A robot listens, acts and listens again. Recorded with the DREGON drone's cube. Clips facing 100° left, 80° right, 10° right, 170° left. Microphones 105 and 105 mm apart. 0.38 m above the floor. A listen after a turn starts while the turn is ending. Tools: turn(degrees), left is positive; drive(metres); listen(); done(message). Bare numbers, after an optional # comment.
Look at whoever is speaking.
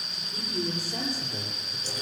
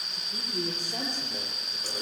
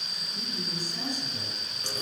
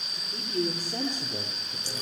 # The man speaking: 150° right.
turn(-150)
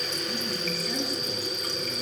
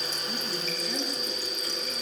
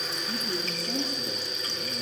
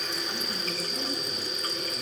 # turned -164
# Nothing new. It was at 15° left.
turn(15)
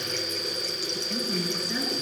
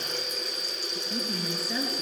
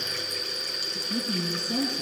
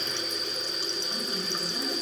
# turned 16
# The man speaking is now 10° left.
turn(10)
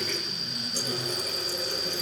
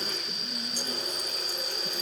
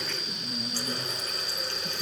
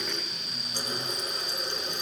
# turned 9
listen()
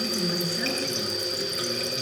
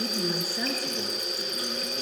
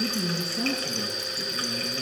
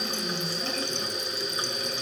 done("Found it: a man speaking, straight ahead, over 4 m away.")